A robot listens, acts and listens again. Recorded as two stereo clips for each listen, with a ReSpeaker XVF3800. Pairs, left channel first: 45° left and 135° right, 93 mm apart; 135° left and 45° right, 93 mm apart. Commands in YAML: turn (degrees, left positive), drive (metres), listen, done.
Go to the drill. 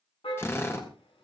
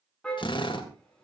turn: 110
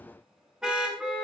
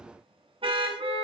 listen: true
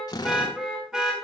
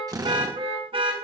drive: 1.0
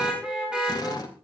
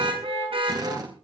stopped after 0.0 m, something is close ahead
done: "Something is in my way. I am facing the drill but have not reached it."